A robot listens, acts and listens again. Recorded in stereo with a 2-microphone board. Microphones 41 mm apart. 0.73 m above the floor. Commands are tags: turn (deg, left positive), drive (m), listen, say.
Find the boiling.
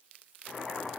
<turn deg="30"/>
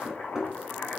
<turn deg="135"/>
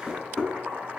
<turn deg="-45"/>
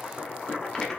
<turn deg="10"/>
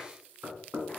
<listen/>
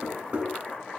<say>Found it: boiling, straight ahead.</say>